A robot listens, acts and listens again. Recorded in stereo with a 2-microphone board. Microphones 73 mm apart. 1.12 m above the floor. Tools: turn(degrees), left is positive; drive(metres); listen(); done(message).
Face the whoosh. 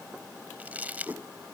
turn(degrees=-35)
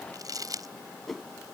done("Found it: a whoosh, straight ahead.")